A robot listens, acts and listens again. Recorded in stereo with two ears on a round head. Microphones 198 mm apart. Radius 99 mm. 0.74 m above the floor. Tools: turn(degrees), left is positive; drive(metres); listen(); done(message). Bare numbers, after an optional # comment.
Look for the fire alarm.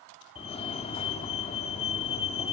# The fire alarm: about 25° left or 155° left.
turn(25)
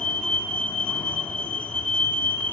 done("Found it: a fire alarm, straight ahead.")